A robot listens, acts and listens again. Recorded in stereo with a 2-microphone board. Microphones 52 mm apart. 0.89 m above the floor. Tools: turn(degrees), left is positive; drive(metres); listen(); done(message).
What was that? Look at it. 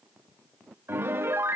turn(degrees=-45)
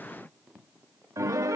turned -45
turn(degrees=-90)
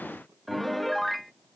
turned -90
done("Found it: a piano, straight ahead.")